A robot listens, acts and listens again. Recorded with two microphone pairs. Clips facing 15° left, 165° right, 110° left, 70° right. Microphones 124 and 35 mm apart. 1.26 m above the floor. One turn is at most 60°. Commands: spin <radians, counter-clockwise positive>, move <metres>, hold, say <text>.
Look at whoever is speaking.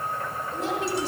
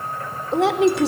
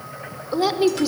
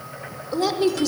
spin -1.05
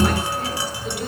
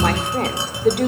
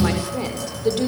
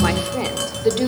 spin -1.05
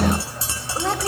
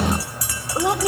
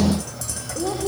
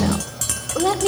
spin -1.05
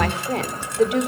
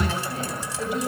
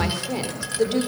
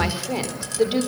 say Facing the woman speaking.